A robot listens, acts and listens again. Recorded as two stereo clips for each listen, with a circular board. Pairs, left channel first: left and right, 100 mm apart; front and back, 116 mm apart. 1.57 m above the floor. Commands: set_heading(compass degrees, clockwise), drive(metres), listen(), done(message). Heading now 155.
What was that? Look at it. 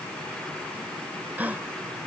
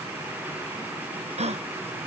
set_heading(320)
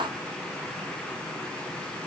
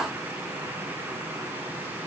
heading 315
done("I heard a gasp from this way, but can't make it out now.")